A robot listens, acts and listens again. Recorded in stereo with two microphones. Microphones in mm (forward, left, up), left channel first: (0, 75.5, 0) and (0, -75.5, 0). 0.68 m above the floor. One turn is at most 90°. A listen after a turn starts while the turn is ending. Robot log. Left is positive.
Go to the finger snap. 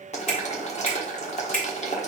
note: The finger snap: about 65° left or 115° left.
cmd yaw +65
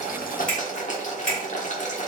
cmd fwd 1.0
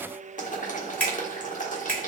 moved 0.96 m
note: The finger snap is now 10° left.
cmd yaw +10
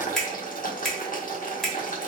cmd fwd 1.0
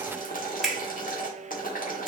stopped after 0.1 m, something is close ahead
end: I am next to the finger snap.